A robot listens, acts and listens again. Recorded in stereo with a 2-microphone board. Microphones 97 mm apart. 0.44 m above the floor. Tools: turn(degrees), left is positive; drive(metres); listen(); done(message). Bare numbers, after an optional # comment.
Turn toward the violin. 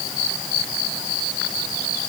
listen()
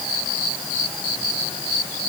listen()
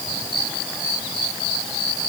done("I can't make out a violin.")